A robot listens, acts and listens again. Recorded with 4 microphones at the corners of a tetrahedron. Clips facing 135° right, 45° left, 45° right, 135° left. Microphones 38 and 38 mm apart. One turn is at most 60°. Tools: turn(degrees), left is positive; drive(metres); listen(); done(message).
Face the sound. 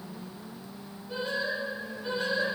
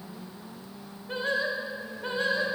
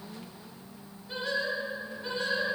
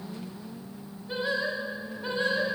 turn(degrees=60)
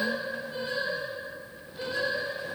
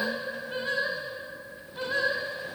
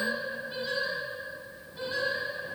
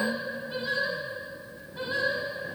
turn(degrees=60)
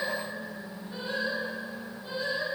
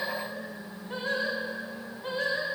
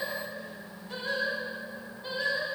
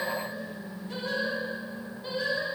turn(degrees=45)
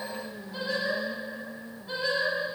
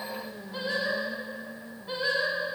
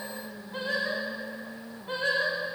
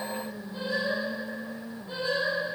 turn(degrees=-20)
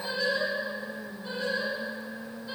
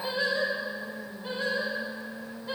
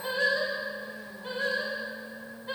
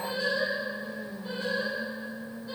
done("Facing the singing.")